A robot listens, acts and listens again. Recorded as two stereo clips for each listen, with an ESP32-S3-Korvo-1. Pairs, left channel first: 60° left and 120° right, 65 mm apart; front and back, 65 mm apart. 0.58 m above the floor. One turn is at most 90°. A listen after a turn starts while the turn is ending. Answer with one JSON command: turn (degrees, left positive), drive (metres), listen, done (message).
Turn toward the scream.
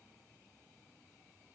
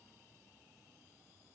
{"listen": true}
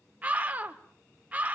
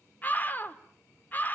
{"turn": -60}
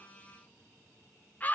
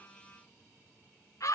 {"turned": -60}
{"done": "Facing the scream, 1 to 2 m away."}